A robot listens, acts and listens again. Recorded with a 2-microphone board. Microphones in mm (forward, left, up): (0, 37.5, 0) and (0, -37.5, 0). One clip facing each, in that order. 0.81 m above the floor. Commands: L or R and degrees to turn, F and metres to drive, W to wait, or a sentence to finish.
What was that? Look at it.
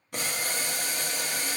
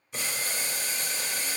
L55
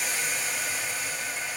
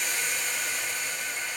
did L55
Found it: boiling, straight ahead, under 1 m away.